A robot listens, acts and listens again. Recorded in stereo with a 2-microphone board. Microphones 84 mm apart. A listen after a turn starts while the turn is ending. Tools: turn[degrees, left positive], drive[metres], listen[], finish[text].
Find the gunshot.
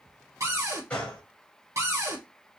Action: turn[30]
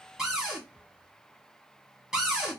Action: listen[]
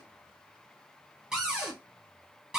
Action: finish[I heard a gunshot, but can't make it out now. It was about 15° right or 135° left.]